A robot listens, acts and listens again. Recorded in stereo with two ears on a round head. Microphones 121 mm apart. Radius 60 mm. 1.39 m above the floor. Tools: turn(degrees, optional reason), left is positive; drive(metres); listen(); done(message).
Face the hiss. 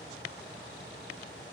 listen()
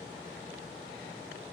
listen()
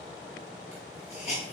turn(degrees=55, reason="The hiss: about 55° left or 125° left.")
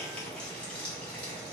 turn(degrees=10, reason="So it is at 10° left.")
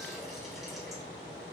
listen()
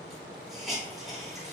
done("Found it: a hiss, straight ahead, 1 to 2 m away.")